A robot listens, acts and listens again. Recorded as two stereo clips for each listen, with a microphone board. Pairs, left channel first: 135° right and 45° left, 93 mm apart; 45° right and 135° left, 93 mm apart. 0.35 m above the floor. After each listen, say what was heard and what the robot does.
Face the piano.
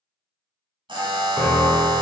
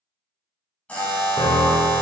The piano: 50° right. Turn 50° right.
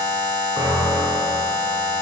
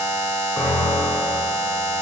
Found it: a piano, straight ahead, 1 to 2 m away.